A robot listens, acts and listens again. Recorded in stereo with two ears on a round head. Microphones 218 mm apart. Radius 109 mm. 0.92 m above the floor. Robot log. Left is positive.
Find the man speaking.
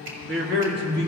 note: The man speaking: about 45° right or 135° right.
cmd yaw -45
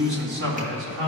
note: So it is at 100° right.
cmd yaw -100
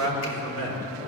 note: The man speaking is now 15° left.
cmd yaw +15
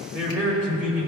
end: Facing the man speaking, 2 to 4 m away.